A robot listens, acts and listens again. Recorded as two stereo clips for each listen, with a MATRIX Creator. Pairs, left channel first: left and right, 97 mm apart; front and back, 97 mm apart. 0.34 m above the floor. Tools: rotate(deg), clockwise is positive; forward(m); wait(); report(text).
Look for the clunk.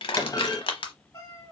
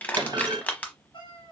rotate(-140)
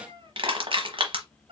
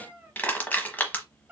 report("I heard a clunk from this way, but can't make it out now.")